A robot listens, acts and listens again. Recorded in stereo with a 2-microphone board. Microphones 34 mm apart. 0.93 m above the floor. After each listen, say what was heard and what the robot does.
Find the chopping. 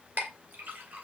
Keep listening.
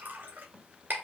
Keep listening.
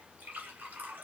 I can't make out chopping to turn to.